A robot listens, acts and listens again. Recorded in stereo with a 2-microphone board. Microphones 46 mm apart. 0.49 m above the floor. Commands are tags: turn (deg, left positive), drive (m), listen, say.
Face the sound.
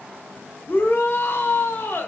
<turn deg="50"/>
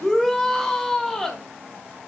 <turn deg="10"/>
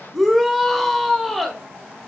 <say>Found it: a shout, straight ahead, 1 to 2 m away.</say>